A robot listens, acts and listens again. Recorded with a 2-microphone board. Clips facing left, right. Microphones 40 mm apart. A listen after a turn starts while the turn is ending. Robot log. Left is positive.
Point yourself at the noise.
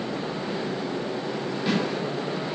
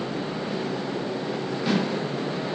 cmd yaw +30
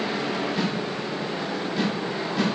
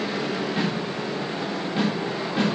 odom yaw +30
note: So it is at 35° right.
cmd yaw -35
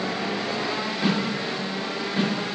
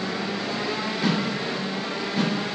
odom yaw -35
note: The snare drum is now 15° left.
cmd yaw +15
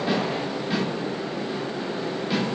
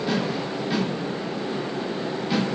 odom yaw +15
end: Facing the snare drum, 2 to 4 m away.